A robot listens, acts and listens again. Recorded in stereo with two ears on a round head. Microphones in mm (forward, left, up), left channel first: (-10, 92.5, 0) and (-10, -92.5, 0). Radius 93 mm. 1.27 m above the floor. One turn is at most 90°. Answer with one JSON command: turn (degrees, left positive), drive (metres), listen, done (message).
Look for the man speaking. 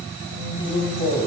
{"turn": 30}
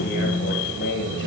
{"turn": 90}
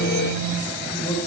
{"turn": 15}
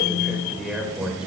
{"done": "Found it: a man speaking, straight ahead, over 4 m away."}